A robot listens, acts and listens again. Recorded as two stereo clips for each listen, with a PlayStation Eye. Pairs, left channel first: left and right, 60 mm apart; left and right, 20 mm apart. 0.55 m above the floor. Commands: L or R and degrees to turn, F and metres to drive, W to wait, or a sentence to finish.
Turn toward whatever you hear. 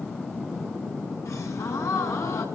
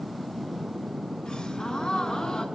L55
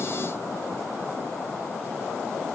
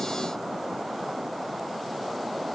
W
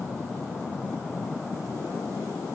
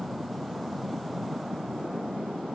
I heard a gasp, but can't make it out now. It was about straight ahead or 70° left.